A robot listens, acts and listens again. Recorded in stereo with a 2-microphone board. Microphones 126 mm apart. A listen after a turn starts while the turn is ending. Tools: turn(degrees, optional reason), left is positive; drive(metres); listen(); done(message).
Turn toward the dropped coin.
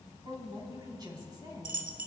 turn(degrees=-90)
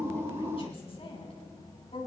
done("Facing where the dropped coin came from. I can't hear it now.")